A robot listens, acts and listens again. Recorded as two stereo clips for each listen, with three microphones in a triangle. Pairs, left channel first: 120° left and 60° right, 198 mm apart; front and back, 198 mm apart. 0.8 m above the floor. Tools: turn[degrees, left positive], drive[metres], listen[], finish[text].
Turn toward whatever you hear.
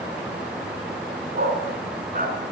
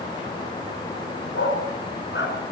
Thought: The dog barking: 15° right.
Action: turn[-15]
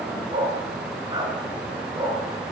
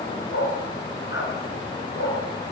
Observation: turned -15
Thought: The dog barking is now 15° left.
Action: turn[15]
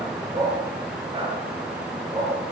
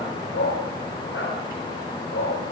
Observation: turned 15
Thought: The dog barking is now 10° left.
Action: turn[10]
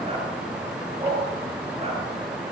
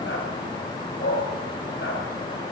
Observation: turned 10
Action: finish[Found it: a dog barking, straight ahead.]